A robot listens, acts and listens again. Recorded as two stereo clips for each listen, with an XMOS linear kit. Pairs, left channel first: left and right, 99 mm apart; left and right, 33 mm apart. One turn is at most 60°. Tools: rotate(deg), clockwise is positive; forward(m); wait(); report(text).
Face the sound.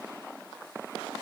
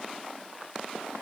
wait()
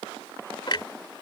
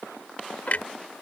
rotate(-50)
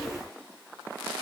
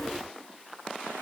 wait()
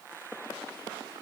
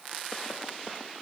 report("I heard a clunk, but can't make it out now. It was about straight ahead or 80° left.")